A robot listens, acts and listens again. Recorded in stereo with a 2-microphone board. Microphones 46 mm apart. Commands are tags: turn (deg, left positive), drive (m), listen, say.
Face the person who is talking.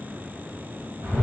<listen/>
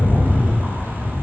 <listen/>
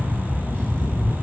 <say>I can't make out anyone speaking to turn to.</say>